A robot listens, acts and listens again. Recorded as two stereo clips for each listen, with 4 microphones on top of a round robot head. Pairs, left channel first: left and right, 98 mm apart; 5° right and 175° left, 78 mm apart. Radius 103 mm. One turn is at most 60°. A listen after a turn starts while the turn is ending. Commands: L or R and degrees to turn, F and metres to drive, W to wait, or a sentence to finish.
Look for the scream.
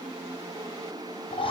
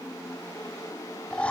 W
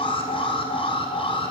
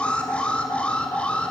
W
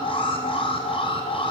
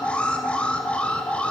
I can't make out a scream to turn to.